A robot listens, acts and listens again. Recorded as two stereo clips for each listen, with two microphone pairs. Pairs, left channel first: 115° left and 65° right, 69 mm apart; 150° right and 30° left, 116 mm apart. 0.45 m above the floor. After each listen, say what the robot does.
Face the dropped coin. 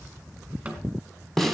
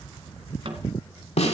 Keep listening.
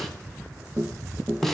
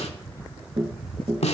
Keep listening.
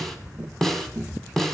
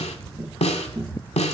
I can't make out a dropped coin to turn to.